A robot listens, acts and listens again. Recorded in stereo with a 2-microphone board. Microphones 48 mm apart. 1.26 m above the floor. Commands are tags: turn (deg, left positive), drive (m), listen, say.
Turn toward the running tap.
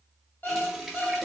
<turn deg="30"/>
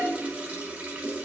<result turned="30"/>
<turn deg="-30"/>
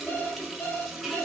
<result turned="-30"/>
<say>Found it: a running tap, straight ahead, 1 to 2 m away.</say>